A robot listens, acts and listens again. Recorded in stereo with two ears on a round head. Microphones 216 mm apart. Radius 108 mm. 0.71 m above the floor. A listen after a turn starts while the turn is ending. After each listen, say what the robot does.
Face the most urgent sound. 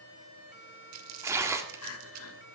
Turn 65° left.
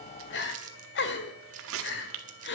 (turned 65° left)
Turn 50° left.
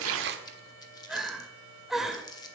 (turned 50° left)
Found it: crying, straight ahead.